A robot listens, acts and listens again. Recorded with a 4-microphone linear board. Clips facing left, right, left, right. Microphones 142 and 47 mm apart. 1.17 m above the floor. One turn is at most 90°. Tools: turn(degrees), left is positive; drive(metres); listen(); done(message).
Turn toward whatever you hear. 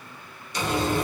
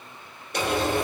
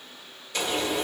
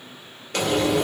turn(degrees=-60)
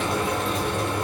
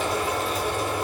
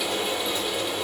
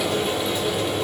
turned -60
done("Facing the frying, 1 to 2 m away.")